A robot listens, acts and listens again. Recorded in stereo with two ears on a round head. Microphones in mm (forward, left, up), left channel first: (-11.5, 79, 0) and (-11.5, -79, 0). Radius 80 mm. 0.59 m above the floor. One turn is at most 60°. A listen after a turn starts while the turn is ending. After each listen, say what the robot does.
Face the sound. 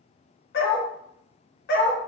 Turn 60° left.
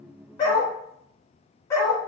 Turn 20° left.
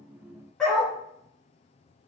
Facing the dog barking.